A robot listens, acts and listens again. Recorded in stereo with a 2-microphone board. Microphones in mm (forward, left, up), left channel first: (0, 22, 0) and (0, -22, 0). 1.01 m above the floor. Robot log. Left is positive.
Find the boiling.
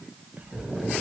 cmd yaw +30
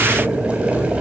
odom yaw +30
note: So it is at 30° right.
cmd yaw -30
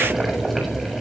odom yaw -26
end: Found it: boiling, straight ahead, over 4 m away.